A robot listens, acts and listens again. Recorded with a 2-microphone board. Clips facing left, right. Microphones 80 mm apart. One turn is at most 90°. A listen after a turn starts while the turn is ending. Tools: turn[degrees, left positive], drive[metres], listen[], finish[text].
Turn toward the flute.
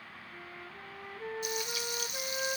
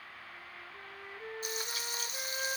Action: turn[30]
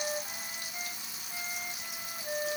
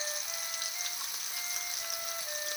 Thought: So it is at 145° left.
Action: turn[90]
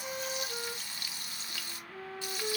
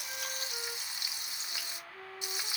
Thought: The flute is now 50° left.
Action: turn[50]
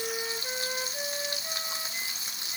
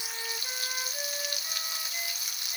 Action: listen[]
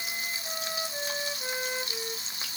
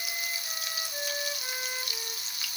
Action: finish[Found it: a flute, straight ahead.]